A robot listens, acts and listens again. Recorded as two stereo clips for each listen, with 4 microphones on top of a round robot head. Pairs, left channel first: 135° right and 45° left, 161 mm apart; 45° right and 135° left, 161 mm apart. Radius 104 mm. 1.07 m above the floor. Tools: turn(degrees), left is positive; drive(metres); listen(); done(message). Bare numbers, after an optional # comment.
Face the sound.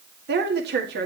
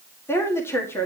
# The woman speaking: 35° left.
turn(35)
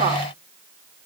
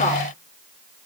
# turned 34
listen()
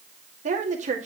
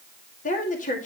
done("Facing the woman speaking.")